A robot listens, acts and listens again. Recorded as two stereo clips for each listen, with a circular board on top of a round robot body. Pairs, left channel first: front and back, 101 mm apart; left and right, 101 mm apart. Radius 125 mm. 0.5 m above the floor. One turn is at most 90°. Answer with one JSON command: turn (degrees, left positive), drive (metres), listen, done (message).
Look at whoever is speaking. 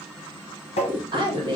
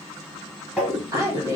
{"turn": -90}
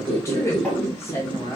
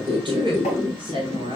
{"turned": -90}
{"turn": -60}
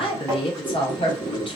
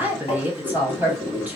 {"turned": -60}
{"turn": -20}
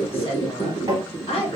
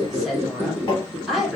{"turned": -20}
{"done": "Found it: a woman speaking, straight ahead."}